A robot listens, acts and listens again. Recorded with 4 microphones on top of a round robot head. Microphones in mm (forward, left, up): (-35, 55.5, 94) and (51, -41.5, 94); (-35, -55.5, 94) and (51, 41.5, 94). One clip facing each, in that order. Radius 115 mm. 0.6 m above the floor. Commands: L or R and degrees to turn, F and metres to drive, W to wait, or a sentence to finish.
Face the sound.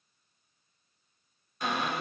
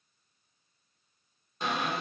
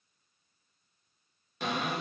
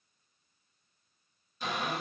R115
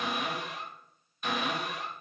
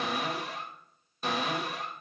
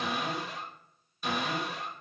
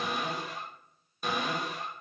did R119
Facing the cupboard door.